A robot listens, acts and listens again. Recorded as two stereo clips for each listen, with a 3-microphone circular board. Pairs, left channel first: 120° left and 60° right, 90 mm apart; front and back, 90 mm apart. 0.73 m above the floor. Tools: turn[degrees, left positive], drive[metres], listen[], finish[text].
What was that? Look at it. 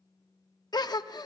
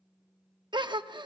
Thought: The gasp: 155° left.
Action: turn[155]
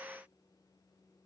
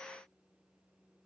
Action: finish[I heard a gasp from this way, but can't make it out now.]